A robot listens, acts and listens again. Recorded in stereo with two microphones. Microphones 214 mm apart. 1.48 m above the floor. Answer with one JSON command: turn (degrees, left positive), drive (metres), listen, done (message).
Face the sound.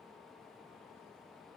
{"listen": true}
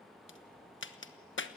{"turn": 65}
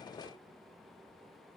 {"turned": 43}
{"listen": true}
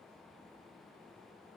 {"done": "I heard a crack, but can't make it out now. It was about 20° left or 75° left."}